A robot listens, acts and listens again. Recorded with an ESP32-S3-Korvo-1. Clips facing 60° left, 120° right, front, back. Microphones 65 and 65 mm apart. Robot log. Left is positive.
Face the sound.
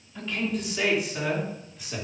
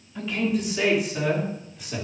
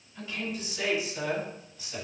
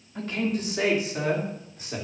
note: The man speaking: 150° left.
cmd yaw +150
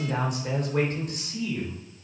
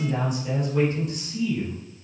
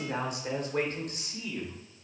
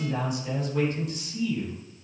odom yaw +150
note: The man speaking is now 30° left.
cmd yaw +30
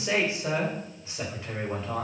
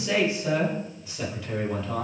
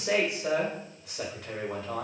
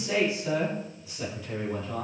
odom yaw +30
end: Found it: a man speaking, straight ahead.